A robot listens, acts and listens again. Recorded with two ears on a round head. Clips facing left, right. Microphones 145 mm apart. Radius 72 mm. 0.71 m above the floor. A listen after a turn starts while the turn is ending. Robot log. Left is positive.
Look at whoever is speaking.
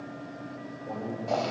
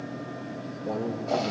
note: The man speaking: about 50° right or 130° right.
cmd yaw -50
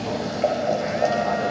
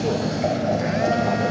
cmd idle
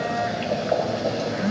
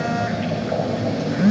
cmd idle
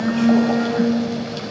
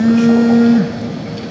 end: I heard a man speaking, but can't make it out now. It was about straight ahead or 80° right.